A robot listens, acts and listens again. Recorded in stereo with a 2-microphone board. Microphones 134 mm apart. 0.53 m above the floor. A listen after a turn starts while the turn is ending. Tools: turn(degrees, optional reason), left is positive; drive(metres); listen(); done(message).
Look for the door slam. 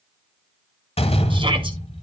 turn(degrees=50, reason="The door slam: about 50° left or 130° left.")
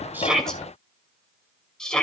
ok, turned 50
listen()
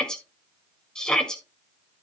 done("I heard a door slam, but can't make it out now. It was about straight ahead or 80° left.")